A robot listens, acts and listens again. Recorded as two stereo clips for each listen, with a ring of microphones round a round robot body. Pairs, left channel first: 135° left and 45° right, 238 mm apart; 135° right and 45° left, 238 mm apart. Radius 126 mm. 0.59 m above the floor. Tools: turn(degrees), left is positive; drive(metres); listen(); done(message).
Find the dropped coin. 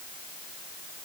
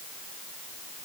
listen()
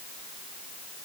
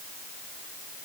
listen()
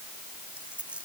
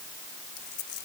turn(degrees=-130)
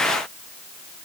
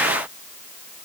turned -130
done("Facing where the dropped coin came from. I can't hear it now.")